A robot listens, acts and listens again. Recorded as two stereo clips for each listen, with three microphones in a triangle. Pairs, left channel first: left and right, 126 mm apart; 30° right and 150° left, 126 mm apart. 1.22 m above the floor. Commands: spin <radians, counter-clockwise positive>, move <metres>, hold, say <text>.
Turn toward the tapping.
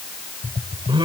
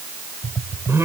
spin 1.31
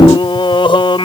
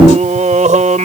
hold
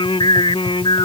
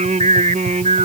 hold
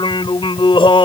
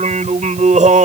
say Facing where the tapping came from. I can't hear it now.